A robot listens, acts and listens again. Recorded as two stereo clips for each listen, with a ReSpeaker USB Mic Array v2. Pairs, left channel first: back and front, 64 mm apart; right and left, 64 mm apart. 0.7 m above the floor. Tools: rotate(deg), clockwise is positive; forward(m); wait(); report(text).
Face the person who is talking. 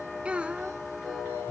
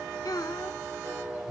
rotate(75)
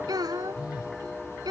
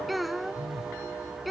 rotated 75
report("Facing the child speaking.")